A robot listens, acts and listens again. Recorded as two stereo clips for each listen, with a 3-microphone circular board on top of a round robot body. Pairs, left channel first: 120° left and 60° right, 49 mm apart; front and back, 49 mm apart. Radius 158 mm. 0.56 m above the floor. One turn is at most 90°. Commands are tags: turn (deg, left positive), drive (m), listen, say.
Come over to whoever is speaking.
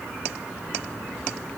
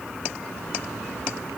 <listen/>
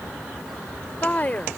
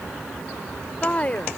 <turn deg="60"/>
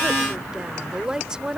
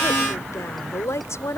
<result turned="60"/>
<turn deg="15"/>
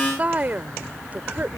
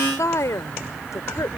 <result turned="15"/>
<drive m="1.0"/>
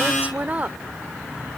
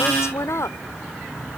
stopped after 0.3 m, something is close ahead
<say>Blocked. The woman speaking is further on, straight ahead.</say>